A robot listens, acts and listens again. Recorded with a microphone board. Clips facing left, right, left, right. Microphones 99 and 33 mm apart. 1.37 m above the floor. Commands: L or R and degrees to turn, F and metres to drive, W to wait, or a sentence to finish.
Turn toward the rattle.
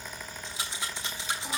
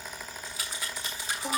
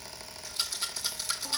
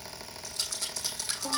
L25
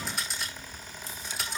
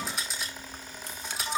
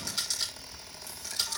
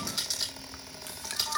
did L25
Found it: a rattle, straight ahead.